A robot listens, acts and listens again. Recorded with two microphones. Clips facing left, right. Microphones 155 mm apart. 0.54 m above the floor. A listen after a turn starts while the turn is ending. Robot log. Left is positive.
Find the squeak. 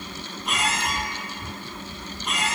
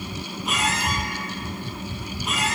cmd yaw +30
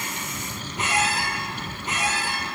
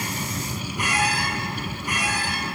note: So it is at 150° left.
cmd yaw +150
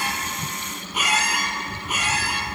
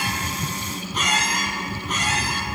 note: The squeak is now 10° left.
cmd yaw +10
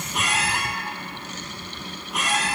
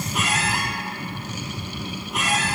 end: Facing the squeak.